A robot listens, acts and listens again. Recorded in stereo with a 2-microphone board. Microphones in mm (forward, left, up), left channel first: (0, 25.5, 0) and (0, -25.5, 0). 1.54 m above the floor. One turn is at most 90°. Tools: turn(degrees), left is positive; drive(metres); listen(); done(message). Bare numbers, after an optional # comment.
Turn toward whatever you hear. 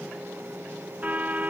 # The car horn: about 30° right or 150° right.
turn(-30)
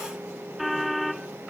done("Facing the car horn.")